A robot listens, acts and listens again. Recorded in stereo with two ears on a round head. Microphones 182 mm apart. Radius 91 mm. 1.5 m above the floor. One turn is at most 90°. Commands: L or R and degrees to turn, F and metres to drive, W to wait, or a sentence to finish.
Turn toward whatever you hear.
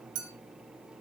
R90
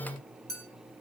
Found it: a clink, straight ahead, 2 to 4 m away.